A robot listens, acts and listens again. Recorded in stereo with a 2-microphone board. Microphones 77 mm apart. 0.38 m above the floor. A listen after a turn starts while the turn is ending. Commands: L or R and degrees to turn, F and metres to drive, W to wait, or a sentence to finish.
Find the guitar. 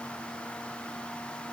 W
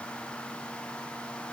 W
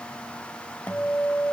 L25
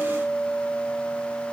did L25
Facing the guitar.